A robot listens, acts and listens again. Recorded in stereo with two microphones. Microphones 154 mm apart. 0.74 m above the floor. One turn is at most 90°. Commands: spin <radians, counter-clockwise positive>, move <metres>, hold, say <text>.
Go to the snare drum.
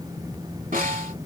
spin -1.13
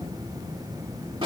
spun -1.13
spin -0.61
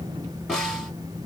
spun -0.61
move 1.0
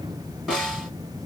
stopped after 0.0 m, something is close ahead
say Blocked. The snare drum is further on, straight ahead.